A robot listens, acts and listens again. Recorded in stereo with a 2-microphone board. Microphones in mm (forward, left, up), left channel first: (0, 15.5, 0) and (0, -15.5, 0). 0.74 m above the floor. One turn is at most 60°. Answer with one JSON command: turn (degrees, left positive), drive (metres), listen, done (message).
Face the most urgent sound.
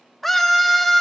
{"turn": 30}
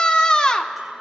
{"turn": 60}
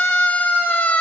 {"turn": 60}
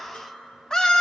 {"turn": 25}
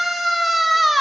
{"done": "Found it: a scream, straight ahead, 1 to 2 m away."}